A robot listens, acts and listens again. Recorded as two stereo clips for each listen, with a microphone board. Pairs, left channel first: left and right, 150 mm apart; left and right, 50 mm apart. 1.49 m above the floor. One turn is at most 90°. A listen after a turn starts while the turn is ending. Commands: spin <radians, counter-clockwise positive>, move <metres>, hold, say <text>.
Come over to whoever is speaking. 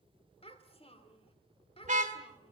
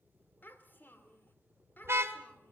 spin 0.70
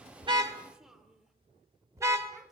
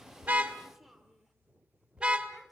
move 1.0
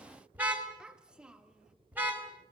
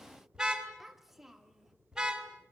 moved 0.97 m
move 1.0
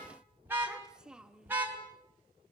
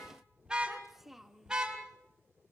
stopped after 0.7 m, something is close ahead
say I am next to the child speaking.